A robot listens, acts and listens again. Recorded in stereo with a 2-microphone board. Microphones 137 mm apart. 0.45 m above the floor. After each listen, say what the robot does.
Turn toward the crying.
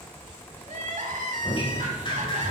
Turn 65° right.
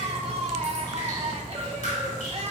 Turn 50° right.
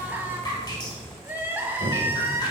Turn 15° right.
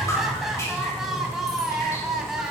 Found it: crying, straight ahead, 1 to 2 m away.